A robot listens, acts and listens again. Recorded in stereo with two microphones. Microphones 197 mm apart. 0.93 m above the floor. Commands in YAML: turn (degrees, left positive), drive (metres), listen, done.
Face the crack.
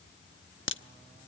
turn: 70
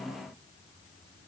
listen: true
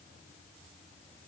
done: "I heard a crack, but can't make it out now. It was about straight ahead or 40° left."